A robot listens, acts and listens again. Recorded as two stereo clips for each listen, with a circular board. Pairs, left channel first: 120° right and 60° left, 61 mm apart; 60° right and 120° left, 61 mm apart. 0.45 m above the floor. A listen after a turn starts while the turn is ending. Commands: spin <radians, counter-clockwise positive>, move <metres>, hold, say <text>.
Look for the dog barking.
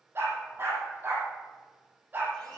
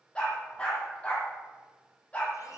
say Found it: a dog barking, straight ahead, over 4 m away.